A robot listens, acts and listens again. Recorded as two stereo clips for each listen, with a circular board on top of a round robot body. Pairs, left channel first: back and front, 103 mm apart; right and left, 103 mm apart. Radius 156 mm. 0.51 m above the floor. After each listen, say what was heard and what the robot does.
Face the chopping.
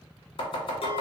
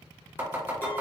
The chopping: 160° left. Turn 160° left.
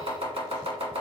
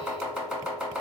The chopping is now 10° left. Turn 10° left.
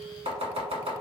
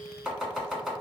Found it: chopping, straight ahead, 1 to 2 m away.